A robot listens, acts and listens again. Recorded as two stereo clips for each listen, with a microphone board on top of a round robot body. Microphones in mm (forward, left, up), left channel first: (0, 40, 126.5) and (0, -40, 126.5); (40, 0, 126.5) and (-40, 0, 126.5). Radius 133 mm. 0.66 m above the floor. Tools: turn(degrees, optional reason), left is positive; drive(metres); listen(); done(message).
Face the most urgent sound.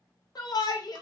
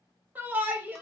turn(degrees=115, reason="The shout: 115° left.")
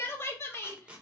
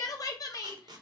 turn(degrees=35, reason="The shout is now 35° left.")
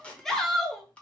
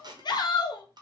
done("Facing the shout.")